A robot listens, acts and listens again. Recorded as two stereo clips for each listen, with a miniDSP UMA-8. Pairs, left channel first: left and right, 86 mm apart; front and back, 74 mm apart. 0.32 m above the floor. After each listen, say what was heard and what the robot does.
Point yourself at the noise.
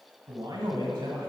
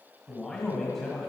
The man speaking: 85° right. Turn 85° right.
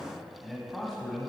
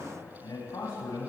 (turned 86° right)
Found it: a man speaking, straight ahead, 1 to 2 m away.